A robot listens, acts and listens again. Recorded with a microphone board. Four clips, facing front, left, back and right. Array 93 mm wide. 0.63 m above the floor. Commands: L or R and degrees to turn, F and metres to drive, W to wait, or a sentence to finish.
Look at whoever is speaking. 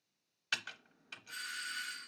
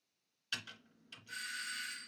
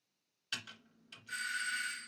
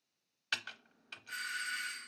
W
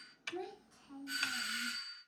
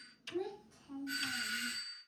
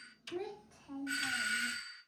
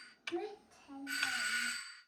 R125
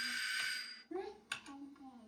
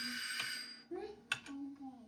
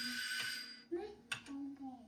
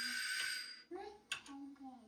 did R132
Found it: a child speaking, straight ahead.